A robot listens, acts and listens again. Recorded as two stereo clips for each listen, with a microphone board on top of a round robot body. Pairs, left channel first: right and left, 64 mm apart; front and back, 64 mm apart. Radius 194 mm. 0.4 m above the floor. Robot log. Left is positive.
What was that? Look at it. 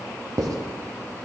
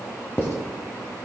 note: The writing: 55° left.
cmd yaw +55
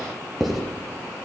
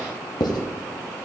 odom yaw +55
end: Found it: writing, straight ahead, 1 to 2 m away.